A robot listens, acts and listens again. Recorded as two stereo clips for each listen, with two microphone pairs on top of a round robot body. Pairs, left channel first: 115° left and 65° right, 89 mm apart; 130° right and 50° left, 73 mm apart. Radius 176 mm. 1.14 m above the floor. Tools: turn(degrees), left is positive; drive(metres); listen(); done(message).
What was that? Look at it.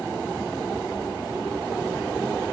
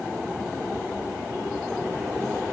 listen()
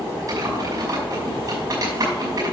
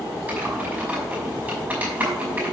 turn(degrees=-20)
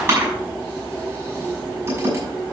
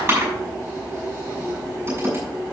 done("Facing the typing on a keyboard, over 4 m away.")